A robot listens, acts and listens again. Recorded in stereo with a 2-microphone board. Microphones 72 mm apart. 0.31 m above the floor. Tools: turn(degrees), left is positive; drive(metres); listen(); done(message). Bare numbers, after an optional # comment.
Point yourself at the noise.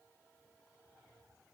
listen()
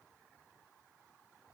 listen()
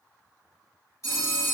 # The phone ringing: about 45° left or 135° left.
turn(45)
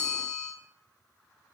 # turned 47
# So it is at 10° left.
turn(10)
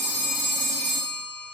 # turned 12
done("Facing the phone ringing, 1 to 2 m away.")